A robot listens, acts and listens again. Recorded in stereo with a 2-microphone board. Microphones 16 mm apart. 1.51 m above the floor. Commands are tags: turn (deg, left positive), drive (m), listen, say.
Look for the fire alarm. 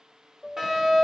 <turn deg="-35"/>
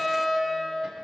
<say>Facing the fire alarm, over 4 m away.</say>